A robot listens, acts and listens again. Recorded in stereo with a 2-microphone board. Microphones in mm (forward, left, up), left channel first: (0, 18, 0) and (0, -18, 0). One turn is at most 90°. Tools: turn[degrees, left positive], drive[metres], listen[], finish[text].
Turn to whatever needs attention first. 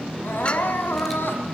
Thought: The crying: about 75° left or 105° left.
Action: turn[75]
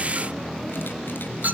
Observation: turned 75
Action: listen[]
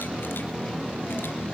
Action: listen[]
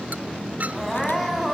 Action: finish[Facing the crying.]